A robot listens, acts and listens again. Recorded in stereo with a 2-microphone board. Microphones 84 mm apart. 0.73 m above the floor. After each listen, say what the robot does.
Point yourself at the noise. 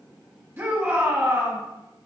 Turn 30° right.
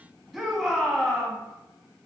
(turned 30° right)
Turn 10° right.
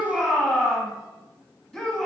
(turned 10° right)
Found it: a shout, straight ahead, 1 to 2 m away.